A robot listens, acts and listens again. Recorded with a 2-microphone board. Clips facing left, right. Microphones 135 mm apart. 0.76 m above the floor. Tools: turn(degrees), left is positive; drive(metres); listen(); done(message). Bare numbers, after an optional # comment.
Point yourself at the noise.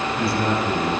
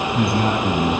# The man speaking: about 60° right or 120° right.
turn(-60)
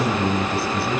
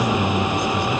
# So it is at 10° left.
turn(10)
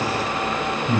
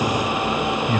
# The man speaking is now 10° left.
turn(10)
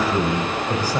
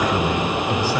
# The man speaking is now 15° left.
turn(15)
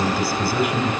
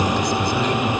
# The man speaking is now 10° left.
turn(10)
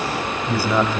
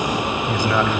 # The man speaking is now 15° left.
turn(15)
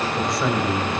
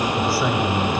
done("Facing the man speaking.")